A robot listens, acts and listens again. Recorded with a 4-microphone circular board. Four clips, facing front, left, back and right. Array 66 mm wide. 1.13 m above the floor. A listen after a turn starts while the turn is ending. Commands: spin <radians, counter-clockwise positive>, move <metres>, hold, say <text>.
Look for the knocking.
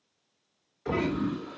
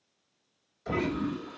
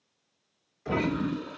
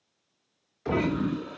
spin -1.31
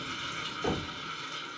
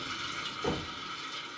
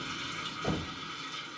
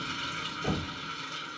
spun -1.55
spin 0.26
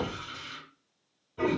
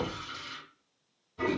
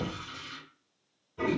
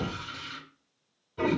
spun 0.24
hold
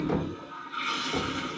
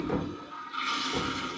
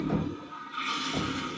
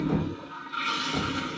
hold
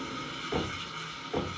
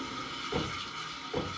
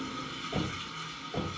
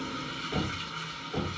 say Facing the knocking.